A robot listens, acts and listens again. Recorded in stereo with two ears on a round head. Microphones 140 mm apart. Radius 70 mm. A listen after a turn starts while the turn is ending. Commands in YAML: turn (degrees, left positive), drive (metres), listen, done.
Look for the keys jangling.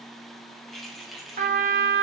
turn: 30
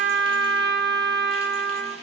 listen: true
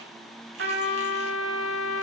listen: true
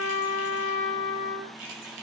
turn: -60
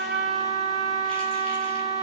listen: true
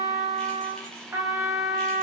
listen: true
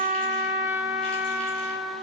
done: "I heard keys jangling from this way, but can't make it out now."